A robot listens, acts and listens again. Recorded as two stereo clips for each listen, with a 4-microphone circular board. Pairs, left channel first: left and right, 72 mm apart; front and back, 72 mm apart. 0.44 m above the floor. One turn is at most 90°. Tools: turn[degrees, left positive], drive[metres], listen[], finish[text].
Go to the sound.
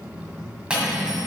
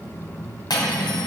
Thought: The cutlery clinking: 15° right.
Action: turn[-15]
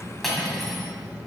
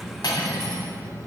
Action: drive[1.0]
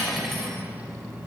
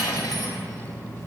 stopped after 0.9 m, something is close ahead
Action: finish[Arrived at the cutlery clinking, straight ahead.]